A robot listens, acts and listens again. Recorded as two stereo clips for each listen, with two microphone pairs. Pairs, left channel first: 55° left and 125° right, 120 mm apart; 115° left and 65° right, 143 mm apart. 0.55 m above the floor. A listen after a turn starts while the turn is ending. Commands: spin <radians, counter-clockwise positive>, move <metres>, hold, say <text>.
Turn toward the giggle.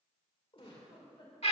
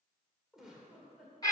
spin 0.35
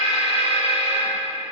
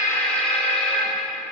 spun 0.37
hold
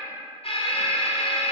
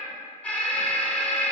hold
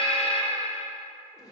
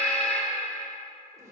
say Facing the giggle.